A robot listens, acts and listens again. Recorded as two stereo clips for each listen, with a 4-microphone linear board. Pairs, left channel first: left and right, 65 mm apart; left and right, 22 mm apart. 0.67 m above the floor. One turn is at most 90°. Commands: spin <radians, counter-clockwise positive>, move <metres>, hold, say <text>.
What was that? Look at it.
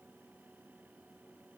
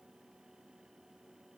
hold
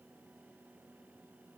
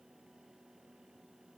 hold
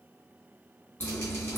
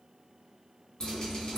spin 0.61
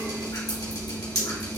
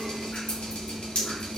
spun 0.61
spin 1.57
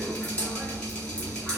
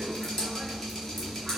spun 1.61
spin 0.26
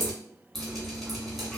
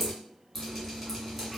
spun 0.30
say Found it: dripping, straight ahead, 1 to 2 m away.